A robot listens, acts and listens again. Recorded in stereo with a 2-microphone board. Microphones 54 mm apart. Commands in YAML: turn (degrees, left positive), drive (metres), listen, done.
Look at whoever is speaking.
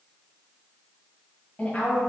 turn: 25
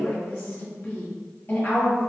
turn: 125
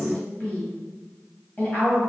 turn: 35
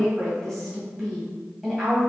done: "Facing the woman speaking, 1 to 2 m away."